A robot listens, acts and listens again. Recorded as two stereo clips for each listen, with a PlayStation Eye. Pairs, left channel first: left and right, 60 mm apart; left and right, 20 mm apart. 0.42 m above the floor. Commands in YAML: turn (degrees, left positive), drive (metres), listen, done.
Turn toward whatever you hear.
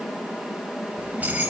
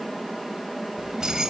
turn: -25
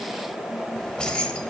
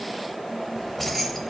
turn: 20
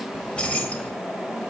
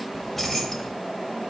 turn: 25
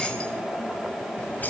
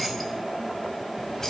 turn: 30
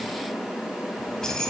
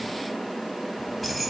turn: 10
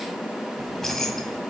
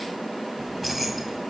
done: "Facing the keys jangling."